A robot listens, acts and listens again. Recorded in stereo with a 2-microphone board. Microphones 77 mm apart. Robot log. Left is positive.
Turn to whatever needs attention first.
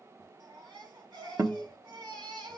cmd yaw -90
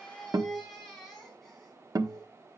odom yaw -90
end: Facing the baby crying, over 4 m away.